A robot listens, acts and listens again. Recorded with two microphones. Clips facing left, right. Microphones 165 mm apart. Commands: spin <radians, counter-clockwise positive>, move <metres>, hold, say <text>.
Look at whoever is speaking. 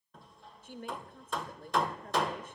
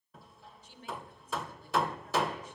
spin 1.05
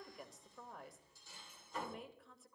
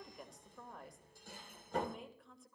say Facing the woman speaking, 1 to 2 m away.